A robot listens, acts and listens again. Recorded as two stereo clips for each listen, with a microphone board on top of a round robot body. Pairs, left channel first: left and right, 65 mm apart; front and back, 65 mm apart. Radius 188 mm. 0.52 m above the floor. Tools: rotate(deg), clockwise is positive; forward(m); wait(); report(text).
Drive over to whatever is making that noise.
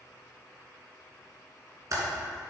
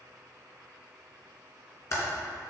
rotate(45)
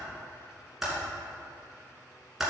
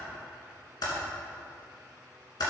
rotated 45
forward(1.0)
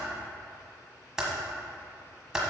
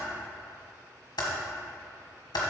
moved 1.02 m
rotate(10)
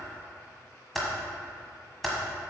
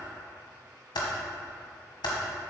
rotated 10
forward(1.0)
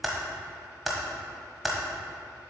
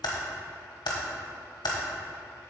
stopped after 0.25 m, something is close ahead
report("I am next to the typing on a keyboard.")